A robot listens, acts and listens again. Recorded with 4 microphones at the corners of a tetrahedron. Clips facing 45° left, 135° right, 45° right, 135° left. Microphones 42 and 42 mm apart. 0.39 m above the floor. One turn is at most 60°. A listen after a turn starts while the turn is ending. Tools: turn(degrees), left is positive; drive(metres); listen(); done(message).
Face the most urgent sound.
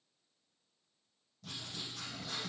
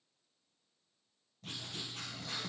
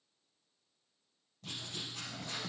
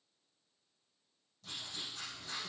listen()
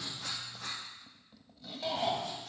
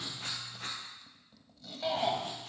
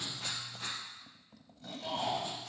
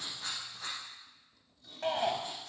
turn(degrees=60)
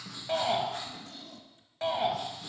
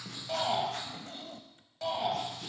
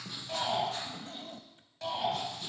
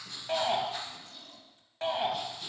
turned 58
turn(degrees=60)
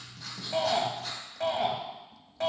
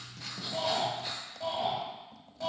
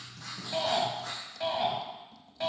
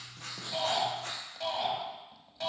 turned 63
turn(degrees=35)
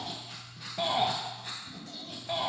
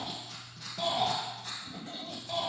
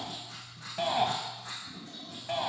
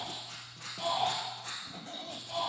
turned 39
done("Found it: a shout, straight ahead.")